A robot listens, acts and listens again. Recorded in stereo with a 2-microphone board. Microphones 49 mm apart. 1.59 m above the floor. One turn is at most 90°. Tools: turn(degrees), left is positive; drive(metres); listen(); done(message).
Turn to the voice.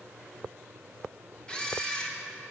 listen()
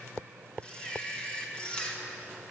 listen()
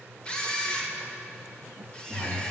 turn(degrees=55)
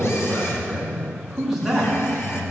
done("Facing the man speaking.")